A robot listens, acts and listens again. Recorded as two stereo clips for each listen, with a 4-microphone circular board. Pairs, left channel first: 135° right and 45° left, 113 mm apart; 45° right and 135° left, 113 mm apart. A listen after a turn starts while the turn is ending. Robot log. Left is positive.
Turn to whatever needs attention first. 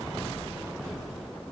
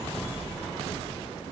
cmd idle
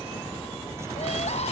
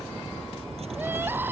cmd idle
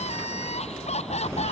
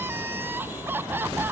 note: The crying: 155° right.
cmd yaw -155
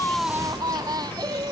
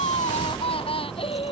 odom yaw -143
note: The crying is now 10° right.
cmd yaw -10
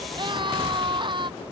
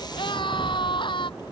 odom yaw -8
end: Found it: crying, straight ahead.